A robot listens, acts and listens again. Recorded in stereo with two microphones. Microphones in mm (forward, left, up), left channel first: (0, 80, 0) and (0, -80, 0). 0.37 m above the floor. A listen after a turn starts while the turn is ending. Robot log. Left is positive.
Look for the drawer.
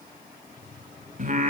note: The drawer: about 50° left or 130° left.
cmd yaw +50
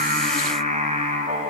cmd idle
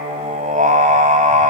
cmd idle
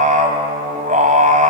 end: I heard a drawer, but can't make it out now. It was about straight ahead or 80° left.